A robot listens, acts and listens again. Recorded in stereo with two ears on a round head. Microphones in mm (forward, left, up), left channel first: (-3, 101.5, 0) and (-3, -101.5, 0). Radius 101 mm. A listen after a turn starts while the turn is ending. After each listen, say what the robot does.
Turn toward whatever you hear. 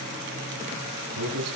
Turn 90° right.
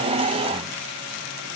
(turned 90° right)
Keep listening.
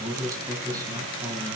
Turn 20° right.
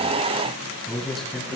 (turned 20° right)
Found it: a man speaking, straight ahead, over 4 m away.